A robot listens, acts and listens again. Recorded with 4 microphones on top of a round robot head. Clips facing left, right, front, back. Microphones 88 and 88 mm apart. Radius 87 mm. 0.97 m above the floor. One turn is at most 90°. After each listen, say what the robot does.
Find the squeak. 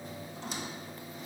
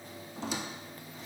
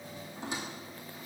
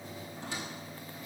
Turn 75° right.
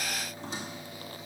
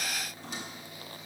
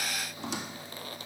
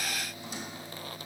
Turn 20° left.
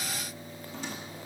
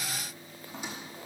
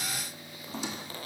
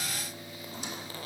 Turn 10° right.
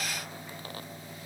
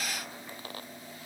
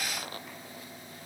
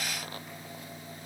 Keep listening.
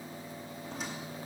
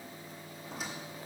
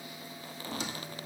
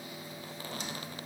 Found it: a squeak, straight ahead, under 1 m away.